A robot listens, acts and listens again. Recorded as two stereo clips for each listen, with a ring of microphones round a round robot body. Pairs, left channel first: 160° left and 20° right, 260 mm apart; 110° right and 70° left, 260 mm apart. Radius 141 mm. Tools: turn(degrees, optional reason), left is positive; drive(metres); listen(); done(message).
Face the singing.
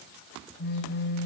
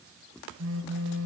listen()
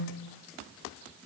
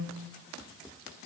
listen()
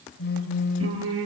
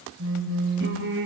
turn(degrees=20, reason="The singing: 20° left.")
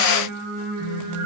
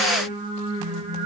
done("Found it: singing, straight ahead.")